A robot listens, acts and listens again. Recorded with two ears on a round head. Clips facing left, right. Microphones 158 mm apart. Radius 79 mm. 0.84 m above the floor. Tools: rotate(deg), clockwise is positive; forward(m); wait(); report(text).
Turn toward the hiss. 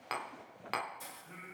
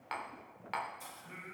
rotate(-25)
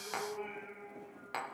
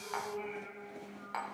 wait()
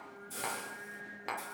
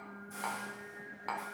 rotate(-125)
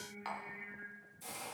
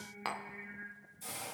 report("Facing the hiss, 1 to 2 m away.")